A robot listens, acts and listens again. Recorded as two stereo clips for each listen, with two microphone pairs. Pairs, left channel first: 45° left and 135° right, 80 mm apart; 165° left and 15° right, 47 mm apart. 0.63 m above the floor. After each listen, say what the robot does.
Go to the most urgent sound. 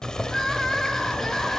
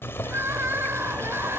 Turn 40° right.
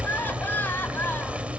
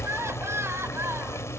Turn 15° right.
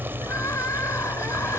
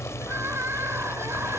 Drive 1.0 m forward.
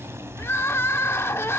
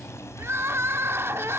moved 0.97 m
Drive 1.0 m forward.
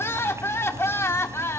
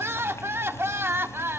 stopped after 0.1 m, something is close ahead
Arrived at the crying, straight ahead.